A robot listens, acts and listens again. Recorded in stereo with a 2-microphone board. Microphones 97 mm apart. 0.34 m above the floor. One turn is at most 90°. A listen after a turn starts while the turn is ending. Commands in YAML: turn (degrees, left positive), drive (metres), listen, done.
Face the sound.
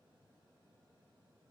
listen: true
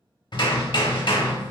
turn: 60
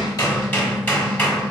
turn: 25
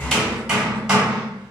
turn: -10
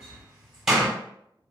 done: "Found it: hammering, straight ahead, under 1 m away."